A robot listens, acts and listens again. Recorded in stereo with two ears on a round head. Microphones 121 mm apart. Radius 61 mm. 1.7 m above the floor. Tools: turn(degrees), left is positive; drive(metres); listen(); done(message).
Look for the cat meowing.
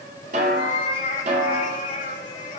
turn(degrees=55)
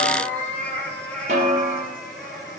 done("Found it: a cat meowing, straight ahead.")